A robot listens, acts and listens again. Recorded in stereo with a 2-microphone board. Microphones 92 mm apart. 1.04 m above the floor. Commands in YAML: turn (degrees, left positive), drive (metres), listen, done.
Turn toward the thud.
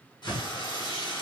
turn: 45
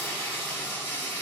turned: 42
listen: true
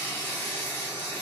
done: "I heard a thud, but can't make it out now. It was about 5° left or 90° left."